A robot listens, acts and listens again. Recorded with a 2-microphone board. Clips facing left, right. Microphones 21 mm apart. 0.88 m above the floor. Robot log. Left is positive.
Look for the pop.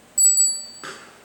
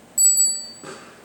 note: The pop: about 60° left or 120° left.
cmd yaw +60
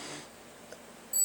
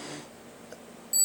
cmd idle
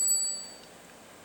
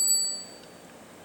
end: I heard a pop, but can't make it out now. It was about straight ahead or 60° left.